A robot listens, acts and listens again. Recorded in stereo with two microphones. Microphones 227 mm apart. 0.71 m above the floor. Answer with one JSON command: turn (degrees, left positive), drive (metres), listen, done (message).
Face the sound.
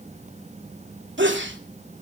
{"turn": -55}
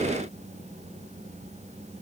{"listen": true}
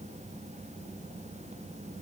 {"done": "I heard a sneeze, but can't make it out now. It was about straight ahead or 70° right."}